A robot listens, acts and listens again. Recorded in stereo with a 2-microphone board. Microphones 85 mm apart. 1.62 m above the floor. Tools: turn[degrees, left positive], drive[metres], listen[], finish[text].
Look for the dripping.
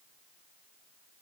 Action: listen[]
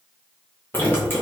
Thought: The dripping: about 25° left or 155° left.
Action: turn[25]
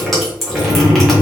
Action: finish[Facing the dripping.]